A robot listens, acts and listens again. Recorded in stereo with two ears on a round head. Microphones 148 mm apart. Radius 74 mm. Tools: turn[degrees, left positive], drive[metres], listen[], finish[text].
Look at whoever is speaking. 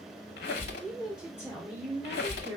Action: turn[-30]
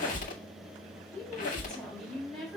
Action: finish[Facing the woman speaking.]